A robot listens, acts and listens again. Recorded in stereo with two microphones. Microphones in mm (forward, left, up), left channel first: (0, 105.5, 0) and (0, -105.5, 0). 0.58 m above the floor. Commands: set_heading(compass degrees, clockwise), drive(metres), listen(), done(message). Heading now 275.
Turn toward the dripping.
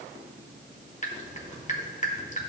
set_heading(240)
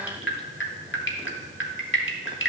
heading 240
set_heading(130)
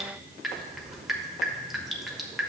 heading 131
done("Facing the dripping, 1 to 2 m away.")